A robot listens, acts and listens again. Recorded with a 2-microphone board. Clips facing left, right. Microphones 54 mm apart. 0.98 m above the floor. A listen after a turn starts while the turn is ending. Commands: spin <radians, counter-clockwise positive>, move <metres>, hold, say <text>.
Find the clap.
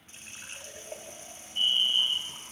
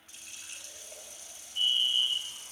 hold
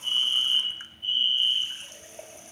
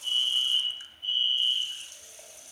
hold
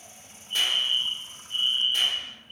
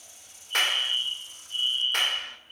spin -1.22
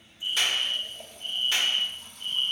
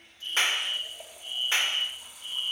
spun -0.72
spin -0.52
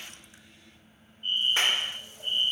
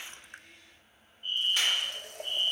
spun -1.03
spin 0.52
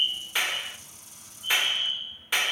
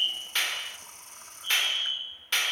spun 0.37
spin 0.17
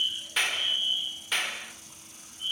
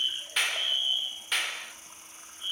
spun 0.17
say Facing the clap.